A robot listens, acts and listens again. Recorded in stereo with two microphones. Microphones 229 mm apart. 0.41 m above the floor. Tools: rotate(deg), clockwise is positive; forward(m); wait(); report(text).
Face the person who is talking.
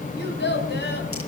rotate(-50)
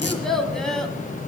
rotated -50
report("Found it: a child speaking, straight ahead.")